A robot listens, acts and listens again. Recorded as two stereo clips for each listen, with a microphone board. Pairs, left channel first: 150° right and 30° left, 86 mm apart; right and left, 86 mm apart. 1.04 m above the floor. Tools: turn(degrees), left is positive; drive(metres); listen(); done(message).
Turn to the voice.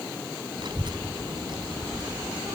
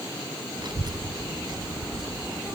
turn(degrees=55)
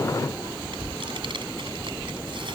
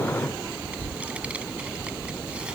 turn(degrees=10)
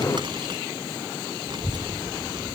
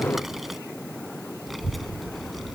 done("Found it: a child speaking, straight ahead.")